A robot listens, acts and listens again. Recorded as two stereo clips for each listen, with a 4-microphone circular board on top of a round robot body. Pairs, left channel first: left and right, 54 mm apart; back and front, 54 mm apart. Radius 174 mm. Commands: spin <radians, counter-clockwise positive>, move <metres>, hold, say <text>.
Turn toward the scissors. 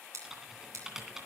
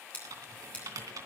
spin -2.01
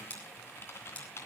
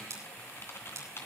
spin 0.44
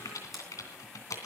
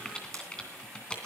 hold
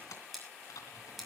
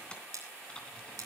say Found it: scissors, straight ahead.